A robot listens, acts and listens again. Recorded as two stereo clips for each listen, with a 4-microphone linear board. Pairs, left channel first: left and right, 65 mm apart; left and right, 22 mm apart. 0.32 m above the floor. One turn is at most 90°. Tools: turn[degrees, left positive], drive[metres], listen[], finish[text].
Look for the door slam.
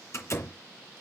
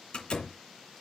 Thought: The door slam: about 45° left or 135° left.
Action: turn[45]
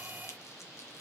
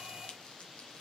Action: listen[]
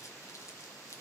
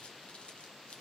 Action: finish[I heard a door slam, but can't make it out now. It was about straight ahead or 90° left.]